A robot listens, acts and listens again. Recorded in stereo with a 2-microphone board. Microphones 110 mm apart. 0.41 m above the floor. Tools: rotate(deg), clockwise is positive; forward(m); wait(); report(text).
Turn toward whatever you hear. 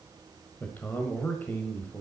rotate(-15)
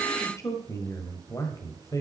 rotate(-150)
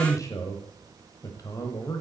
rotate(-35)
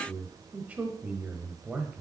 rotate(15)
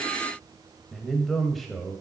report("Found it: a man speaking, straight ahead, 1 to 2 m away.")